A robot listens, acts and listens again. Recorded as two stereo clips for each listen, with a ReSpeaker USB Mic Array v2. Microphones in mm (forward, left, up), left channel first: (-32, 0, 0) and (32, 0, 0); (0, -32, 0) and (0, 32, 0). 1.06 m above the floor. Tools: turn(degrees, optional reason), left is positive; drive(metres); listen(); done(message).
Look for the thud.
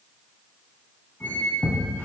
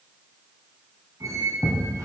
turn(degrees=-100, reason="The thud: 100° right.")
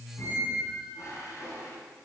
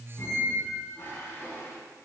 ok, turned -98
done("Facing where the thud came from. I can't hear it now.")